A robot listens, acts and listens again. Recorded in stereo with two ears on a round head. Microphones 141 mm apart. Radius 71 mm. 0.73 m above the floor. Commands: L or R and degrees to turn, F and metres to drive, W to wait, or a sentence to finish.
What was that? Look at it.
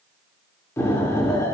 L20
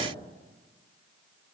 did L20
W
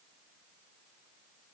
I heard an explosion, but can't make it out now. It was about straight ahead or 140° left.